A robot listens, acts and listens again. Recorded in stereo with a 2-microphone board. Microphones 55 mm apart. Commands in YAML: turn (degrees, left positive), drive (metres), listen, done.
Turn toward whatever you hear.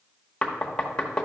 turn: 15
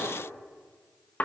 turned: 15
turn: 150
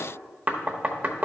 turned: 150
turn: -35
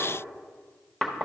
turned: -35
turn: 10
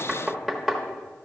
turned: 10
done: "Found it: knocking, straight ahead, under 1 m away."